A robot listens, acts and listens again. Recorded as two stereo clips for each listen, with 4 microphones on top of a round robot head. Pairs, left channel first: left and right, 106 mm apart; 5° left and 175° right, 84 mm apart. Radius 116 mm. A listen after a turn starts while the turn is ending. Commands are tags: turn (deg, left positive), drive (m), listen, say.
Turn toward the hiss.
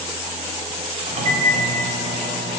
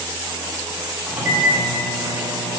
<listen/>
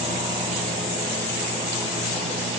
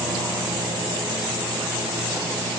<listen/>
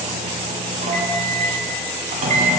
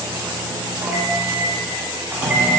<say>I can't make out a hiss to turn to.</say>